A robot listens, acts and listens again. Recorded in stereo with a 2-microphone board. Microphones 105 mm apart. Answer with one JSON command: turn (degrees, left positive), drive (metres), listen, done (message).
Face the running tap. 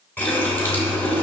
{"turn": 20}
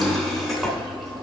{"done": "Facing the running tap."}